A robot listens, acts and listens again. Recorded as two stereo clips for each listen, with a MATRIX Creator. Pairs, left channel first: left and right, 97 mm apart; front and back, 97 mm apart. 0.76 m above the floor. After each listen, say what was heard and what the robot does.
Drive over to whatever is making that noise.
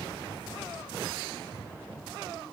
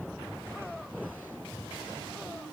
Keep listening.
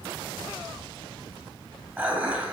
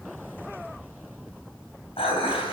The dishes clattering: 20° right. Turn 20° right.
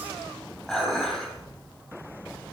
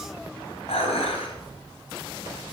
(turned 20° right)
Drive 1.0 m forward.
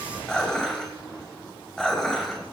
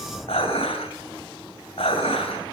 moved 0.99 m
Drive 1.0 m forward.
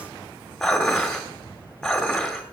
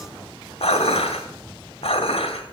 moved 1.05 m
Drive 1.0 m forward.
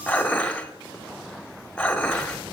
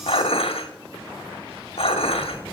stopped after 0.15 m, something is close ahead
The dishes clattering is now 10° left. Turn 10° left.
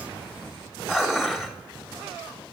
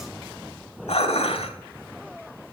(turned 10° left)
Arrived at the dishes clattering, straight ahead.